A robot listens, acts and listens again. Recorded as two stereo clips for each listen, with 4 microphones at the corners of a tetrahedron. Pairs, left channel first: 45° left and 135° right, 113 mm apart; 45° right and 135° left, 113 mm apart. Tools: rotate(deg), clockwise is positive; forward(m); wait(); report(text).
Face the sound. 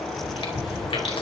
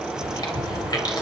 report("Found it: chewing, straight ahead.")